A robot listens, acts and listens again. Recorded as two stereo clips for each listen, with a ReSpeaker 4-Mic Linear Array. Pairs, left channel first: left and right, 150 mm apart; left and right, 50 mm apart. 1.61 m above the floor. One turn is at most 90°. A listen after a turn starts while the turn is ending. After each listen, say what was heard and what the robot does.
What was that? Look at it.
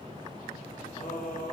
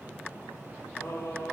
The singing: about 70° left or 110° left. Turn 70° left.
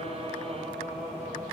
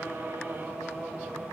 Facing the singing.